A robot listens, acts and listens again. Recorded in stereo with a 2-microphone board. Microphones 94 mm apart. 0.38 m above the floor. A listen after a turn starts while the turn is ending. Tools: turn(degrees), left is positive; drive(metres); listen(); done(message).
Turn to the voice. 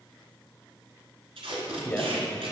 turn(degrees=20)
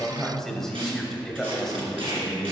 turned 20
done("Found it: a man speaking, straight ahead, 1 to 2 m away.")